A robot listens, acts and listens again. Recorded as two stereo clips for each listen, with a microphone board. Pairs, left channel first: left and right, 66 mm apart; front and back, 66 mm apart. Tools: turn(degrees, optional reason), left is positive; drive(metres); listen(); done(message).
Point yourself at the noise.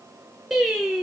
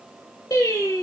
turn(degrees=-10, reason="The singing: 10° right.")
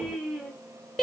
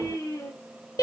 done("Facing the singing, under 1 m away.")